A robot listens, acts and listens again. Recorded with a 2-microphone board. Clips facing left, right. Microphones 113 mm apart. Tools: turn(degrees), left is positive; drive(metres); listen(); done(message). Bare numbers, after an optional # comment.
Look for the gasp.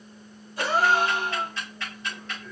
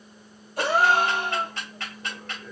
# The gasp: about 55° right or 125° right.
turn(-55)
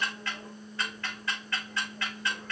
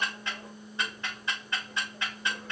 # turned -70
listen()
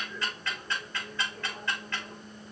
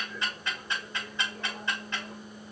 done("I heard a gasp, but can't make it out now. It was about 15° left or 55° right.")